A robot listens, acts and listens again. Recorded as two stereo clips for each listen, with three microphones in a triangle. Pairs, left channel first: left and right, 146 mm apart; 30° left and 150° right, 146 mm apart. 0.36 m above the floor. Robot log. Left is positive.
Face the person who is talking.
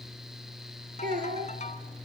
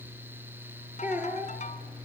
note: The child speaking: 70° right.
cmd yaw -70
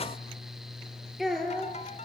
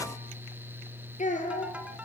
end: Facing the child speaking, over 4 m away.